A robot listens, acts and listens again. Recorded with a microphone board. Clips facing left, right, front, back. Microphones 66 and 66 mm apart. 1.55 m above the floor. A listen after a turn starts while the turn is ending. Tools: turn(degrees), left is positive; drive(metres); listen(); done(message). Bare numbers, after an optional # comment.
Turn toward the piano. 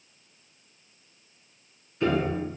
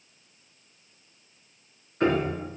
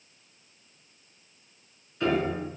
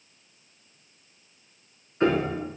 # The piano: 125° right.
turn(-125)
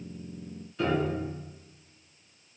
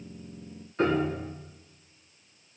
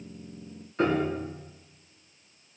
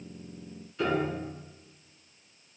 # The piano is now 45° right.
turn(-45)
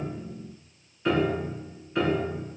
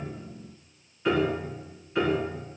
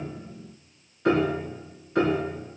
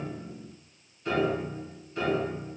done("Found it: a piano, straight ahead.")